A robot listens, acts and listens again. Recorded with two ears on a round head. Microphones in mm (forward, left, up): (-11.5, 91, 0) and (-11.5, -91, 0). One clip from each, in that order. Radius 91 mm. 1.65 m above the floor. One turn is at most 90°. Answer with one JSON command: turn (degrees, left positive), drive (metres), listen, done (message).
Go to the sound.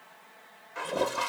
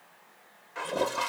{"turn": 30}
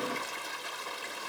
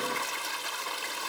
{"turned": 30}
{"turn": -30}
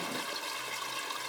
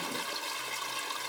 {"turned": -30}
{"turn": -10}
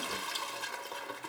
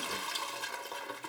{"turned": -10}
{"drive": 1.0}
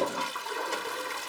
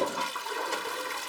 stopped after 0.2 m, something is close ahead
{"done": "Blocked. The toilet flushing is further on, straight ahead."}